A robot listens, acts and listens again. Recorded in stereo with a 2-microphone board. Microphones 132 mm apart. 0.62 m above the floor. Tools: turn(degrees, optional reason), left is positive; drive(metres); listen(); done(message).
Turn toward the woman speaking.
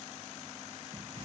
listen()
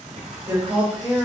turn(degrees=-25, reason="The woman speaking: about 25° right or 155° right.")
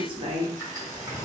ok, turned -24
turn(degrees=-40, reason="The woman speaking: about 40° right or 140° right.")
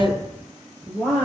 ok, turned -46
turn(degrees=10, reason="So it is at 10° left.")
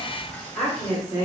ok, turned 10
done("Found it: a woman speaking, straight ahead, 2 to 4 m away.")